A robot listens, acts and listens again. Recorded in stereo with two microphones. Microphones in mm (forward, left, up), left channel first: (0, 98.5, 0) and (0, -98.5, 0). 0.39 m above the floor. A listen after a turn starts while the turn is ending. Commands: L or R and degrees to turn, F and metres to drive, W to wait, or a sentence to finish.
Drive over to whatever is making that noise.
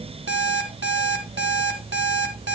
R75
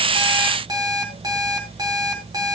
R20
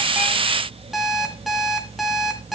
F1.0
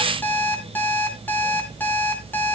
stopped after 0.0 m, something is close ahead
L10
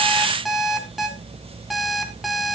Blocked. The alarm clock is further on, straight ahead.